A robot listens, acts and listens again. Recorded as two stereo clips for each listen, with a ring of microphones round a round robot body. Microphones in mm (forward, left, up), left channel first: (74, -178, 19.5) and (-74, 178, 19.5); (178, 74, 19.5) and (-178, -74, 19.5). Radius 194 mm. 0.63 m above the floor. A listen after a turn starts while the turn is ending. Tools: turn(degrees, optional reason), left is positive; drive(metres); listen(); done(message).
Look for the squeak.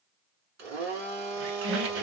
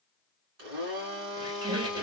turn(degrees=125, reason="The squeak: 125° left.")
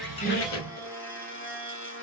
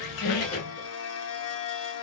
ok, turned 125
turn(degrees=-20, reason="The squeak is now 20° right.")
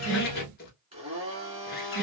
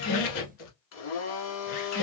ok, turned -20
done("Facing the squeak.")